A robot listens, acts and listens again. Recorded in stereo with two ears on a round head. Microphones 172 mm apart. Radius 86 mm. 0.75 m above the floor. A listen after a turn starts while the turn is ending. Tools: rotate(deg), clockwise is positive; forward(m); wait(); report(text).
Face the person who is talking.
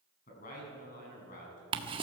rotate(-45)
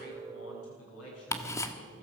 rotate(-90)
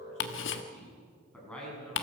report("Facing the man speaking, over 4 m away.")